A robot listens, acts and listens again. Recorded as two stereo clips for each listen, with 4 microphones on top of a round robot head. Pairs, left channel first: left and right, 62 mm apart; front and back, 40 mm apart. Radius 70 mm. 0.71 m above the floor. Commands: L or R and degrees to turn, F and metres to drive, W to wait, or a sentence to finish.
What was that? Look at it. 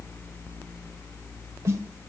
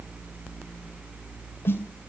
R40
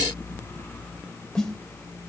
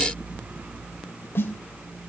L10
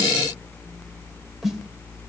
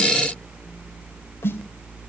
Facing the snare drum, 2 to 4 m away.